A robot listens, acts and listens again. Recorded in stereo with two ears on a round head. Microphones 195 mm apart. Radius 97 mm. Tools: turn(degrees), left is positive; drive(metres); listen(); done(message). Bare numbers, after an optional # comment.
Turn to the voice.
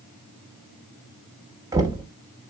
listen()
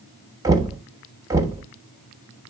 listen()
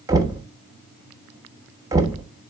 done("I can't make out anyone speaking, only knocking.")